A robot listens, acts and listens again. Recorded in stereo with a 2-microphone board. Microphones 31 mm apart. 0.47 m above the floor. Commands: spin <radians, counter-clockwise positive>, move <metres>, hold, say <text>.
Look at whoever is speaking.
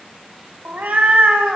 hold
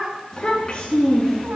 spin 0.35
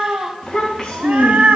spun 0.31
spin 0.52
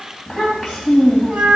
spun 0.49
spin -0.26
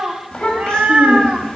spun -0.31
spin 0.17
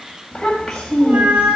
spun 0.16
say Facing the child speaking, 1 to 2 m away.